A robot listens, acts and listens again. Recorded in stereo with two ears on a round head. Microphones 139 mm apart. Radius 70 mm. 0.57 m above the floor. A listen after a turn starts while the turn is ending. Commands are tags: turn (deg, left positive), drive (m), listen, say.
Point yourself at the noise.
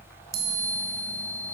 <turn deg="-55"/>
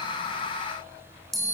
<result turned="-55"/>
<say>Facing the chime, 1 to 2 m away.</say>